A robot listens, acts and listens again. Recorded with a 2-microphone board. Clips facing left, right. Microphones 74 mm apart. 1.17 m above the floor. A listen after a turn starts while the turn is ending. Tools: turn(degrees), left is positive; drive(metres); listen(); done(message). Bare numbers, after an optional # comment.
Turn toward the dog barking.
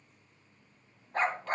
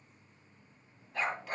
# The dog barking: about 45° left or 135° left.
turn(45)
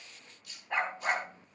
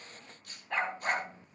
done("Facing the dog barking, 2 to 4 m away.")